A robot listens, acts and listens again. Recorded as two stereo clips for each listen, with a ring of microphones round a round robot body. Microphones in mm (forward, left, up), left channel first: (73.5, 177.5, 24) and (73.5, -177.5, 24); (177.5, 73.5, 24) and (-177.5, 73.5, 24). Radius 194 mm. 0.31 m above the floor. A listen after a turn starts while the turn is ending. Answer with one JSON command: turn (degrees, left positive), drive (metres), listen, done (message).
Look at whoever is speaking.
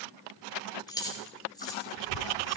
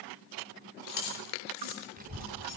{"turn": 115}
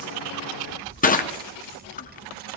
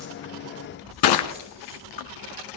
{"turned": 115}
{"turn": -25}
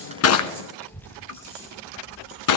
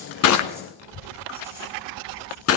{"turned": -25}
{"done": "Found it: a child speaking, straight ahead."}